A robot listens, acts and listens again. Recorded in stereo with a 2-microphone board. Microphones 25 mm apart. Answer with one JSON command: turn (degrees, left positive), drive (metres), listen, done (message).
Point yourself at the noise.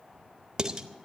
{"turn": -30}
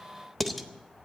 {"done": "Facing the dishes clattering."}